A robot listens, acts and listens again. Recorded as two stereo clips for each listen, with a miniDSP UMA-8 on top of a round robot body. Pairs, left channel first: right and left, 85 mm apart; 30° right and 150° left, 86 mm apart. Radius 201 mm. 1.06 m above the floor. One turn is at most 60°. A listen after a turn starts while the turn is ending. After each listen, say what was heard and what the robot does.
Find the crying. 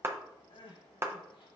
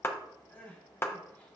The crying: 100° right. Turn 60° right.
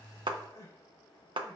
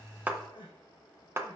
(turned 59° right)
The crying is now 45° right. Turn 45° right.
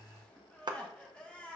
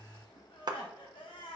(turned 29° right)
The crying is now 15° right. Turn 15° right.
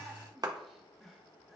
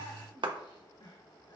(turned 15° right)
Found it: crying, straight ahead, 1 to 2 m away.